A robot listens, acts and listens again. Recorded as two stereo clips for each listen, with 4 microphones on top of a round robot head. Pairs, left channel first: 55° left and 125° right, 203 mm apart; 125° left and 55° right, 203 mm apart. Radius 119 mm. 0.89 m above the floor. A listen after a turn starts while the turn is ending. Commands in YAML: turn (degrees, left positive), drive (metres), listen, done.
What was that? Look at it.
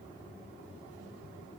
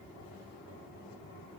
listen: true
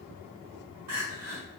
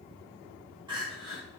turn: -120
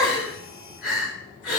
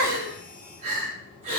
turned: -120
done: "Facing the crying."